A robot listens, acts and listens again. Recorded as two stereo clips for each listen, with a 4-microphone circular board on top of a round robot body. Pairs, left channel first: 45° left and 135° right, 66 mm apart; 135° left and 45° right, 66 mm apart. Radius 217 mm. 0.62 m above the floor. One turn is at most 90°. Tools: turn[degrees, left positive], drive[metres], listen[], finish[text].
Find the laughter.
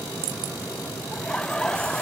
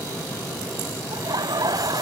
Thought: The laughter: 30° right.
Action: turn[-30]
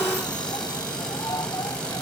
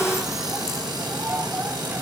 Action: listen[]
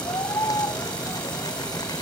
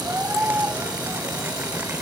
Thought: The laughter is now 15° left.
Action: turn[15]
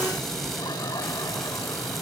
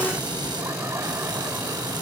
Action: listen[]
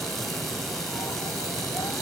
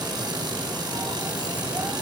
Action: listen[]
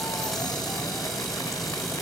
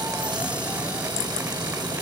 Action: finish[Facing where the laughter came from. I can't hear it now.]